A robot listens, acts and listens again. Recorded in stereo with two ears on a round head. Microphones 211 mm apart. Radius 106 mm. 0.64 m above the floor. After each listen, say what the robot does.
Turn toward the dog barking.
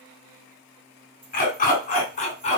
Turn 30° left.
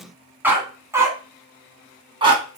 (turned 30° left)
Turn 20° right.
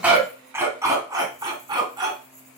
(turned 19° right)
Turn 20° right.
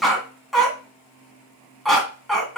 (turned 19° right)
Facing the dog barking, 2 to 4 m away.